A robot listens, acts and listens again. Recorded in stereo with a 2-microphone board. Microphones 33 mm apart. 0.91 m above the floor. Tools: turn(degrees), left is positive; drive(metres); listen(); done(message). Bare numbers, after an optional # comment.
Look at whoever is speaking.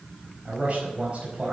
# The man speaking: about 40° right or 140° right.
turn(-40)
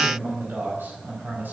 # So it is at 95° right.
turn(-95)
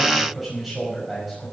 done("Found it: a man speaking, straight ahead, over 4 m away.")